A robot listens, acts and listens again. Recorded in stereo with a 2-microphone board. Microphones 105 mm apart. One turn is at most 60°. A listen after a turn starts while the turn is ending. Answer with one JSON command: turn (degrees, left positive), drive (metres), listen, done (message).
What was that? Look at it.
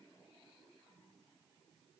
{"listen": true}
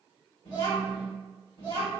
{"turn": 50}
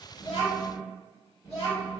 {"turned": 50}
{"turn": 60}
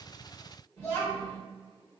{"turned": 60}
{"turn": 35}
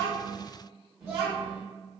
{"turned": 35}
{"done": "Facing the child speaking."}